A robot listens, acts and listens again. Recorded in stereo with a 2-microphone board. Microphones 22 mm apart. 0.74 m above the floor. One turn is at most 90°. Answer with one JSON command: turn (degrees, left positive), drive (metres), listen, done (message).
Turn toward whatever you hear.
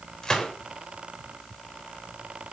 {"turn": 25}
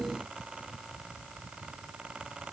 {"listen": true}
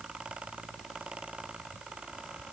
{"done": "I heard a gunshot, but can't make it out now. It was about straight ahead or 130° left."}